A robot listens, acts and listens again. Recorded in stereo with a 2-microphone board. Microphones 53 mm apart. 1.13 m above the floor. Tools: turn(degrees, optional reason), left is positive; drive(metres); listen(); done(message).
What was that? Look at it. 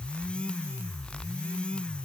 listen()
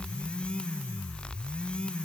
listen()
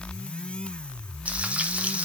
turn(degrees=-25, reason="The frying: about 25° right or 155° right.")
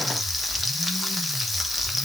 done("Found it: frying, straight ahead, 1 to 2 m away.")